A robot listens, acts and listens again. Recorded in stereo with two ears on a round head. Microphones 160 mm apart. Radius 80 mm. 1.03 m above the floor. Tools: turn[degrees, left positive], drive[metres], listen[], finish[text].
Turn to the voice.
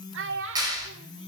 Action: turn[-90]
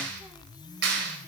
Action: listen[]
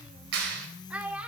Action: finish[Found it: a child speaking, straight ahead.]